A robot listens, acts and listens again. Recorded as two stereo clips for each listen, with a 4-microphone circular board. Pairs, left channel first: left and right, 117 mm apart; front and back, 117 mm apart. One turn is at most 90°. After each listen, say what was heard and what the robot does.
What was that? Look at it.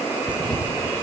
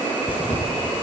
The tearing paper: 45° right. Turn 45° right.
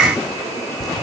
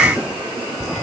Facing the tearing paper.